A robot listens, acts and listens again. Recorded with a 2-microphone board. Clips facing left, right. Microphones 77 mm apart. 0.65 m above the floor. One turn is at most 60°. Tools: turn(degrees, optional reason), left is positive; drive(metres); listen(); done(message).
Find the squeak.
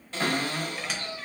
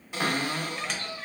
turn(degrees=30)
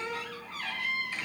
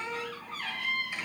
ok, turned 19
turn(degrees=-15, reason="So it is at 15° right.")
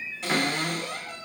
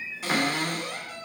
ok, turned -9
done("Facing the squeak.")